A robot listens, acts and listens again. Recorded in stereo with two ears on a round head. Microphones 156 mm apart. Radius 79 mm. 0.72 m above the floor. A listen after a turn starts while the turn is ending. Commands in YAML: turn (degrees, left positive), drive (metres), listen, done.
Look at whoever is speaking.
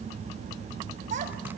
turn: -45
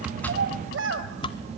turn: -80
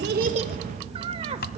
turn: -35
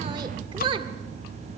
turn: -30
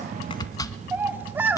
turn: -10
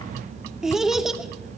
done: "Facing the child speaking."